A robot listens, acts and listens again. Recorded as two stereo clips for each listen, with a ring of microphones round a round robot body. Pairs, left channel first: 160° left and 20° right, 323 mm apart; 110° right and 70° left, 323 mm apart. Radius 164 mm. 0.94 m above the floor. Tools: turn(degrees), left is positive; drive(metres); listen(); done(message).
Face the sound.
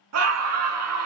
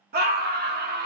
turn(degrees=10)
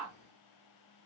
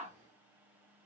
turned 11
listen()
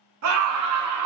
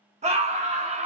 done("Found it: a scream, straight ahead, 1 to 2 m away.")